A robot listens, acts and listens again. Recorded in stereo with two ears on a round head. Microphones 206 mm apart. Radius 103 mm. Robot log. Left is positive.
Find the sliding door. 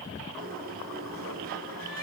note: The sliding door: about 40° right or 140° right.
cmd yaw -40
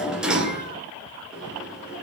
end: Facing the sliding door, 2 to 4 m away.